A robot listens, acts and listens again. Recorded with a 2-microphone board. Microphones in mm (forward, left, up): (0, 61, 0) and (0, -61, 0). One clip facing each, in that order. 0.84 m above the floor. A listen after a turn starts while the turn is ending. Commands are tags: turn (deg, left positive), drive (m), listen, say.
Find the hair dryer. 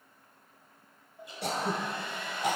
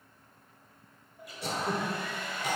<turn deg="25"/>
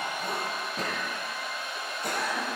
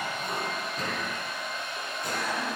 <say>Facing the hair dryer, 1 to 2 m away.</say>